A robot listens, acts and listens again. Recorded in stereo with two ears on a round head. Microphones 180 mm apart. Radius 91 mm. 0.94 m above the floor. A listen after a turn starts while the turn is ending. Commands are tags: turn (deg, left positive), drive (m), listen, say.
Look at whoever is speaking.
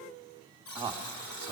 <turn deg="-30"/>
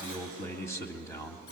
<turn deg="15"/>
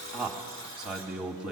<say>Found it: a man speaking, straight ahead.</say>